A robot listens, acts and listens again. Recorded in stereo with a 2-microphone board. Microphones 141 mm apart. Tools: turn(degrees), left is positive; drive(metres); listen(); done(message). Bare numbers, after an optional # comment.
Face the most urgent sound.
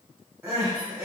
turn(-30)
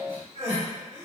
# So it is at 135° right.
turn(-135)
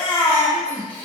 # The crying is now 15° left.
turn(15)
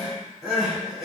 done("Facing the crying.")